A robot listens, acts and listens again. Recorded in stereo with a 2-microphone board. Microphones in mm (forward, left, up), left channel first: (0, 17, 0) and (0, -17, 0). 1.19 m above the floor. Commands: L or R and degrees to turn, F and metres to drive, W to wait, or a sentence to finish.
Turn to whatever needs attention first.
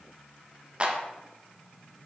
W
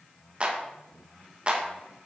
W
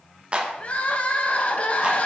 L40
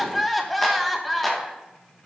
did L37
Facing the crying, under 1 m away.